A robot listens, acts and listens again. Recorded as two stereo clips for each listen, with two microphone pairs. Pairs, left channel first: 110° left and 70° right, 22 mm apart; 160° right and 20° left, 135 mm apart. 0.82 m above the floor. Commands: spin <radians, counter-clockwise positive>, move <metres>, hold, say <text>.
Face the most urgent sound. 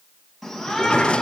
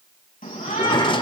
spin -2.79
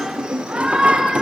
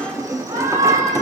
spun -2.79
say Found it: a shout, straight ahead, over 4 m away.